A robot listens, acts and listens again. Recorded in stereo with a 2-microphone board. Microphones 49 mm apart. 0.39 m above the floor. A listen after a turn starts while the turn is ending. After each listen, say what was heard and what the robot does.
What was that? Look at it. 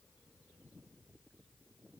Keep listening.
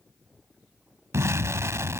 The explosion: about 75° right or 105° right. Turn 75° right.
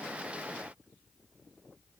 Keep listening.
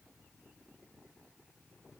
I heard an explosion, but can't make it out now. It was about straight ahead or 30° right.